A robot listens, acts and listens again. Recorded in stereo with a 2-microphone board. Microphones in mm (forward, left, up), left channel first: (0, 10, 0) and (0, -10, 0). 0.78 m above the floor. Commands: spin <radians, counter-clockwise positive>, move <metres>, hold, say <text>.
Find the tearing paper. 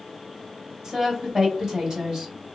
hold
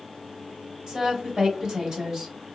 hold
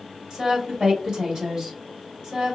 say I can't make out tearing paper, only a woman speaking.